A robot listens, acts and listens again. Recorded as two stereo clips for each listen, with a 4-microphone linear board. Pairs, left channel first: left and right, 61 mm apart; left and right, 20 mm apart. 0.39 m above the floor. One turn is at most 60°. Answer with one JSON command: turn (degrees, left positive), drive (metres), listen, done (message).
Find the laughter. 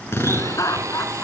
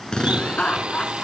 {"turn": 60}
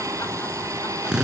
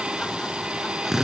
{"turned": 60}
{"listen": true}
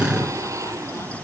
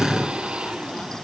{"listen": true}
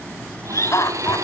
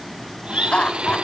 {"turn": 60}
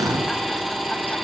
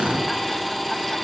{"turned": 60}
{"listen": true}
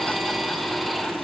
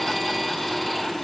{"listen": true}
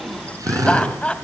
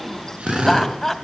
{"turn": 20}
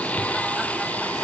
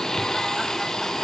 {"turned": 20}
{"listen": true}
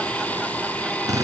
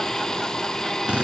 {"listen": true}
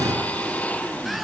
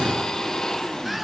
{"done": "Facing where the laughter came from. I can't hear it now."}